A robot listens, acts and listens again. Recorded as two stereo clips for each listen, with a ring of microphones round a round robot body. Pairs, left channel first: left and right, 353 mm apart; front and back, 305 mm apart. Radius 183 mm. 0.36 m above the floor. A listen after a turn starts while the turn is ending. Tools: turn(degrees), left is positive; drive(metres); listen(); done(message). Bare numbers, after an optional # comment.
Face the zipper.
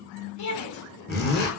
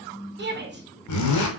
# The zipper: 25° left.
turn(25)
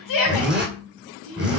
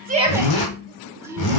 done("Found it: a zipper, straight ahead.")